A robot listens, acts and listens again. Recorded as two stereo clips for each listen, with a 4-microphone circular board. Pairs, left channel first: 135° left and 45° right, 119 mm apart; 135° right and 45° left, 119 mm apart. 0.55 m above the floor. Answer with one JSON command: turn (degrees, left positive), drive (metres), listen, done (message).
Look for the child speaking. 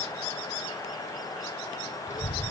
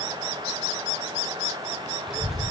{"turn": 130}
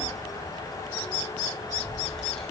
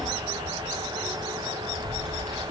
{"turn": 50}
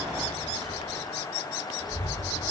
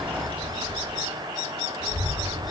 {"done": "Facing the child speaking, over 4 m away."}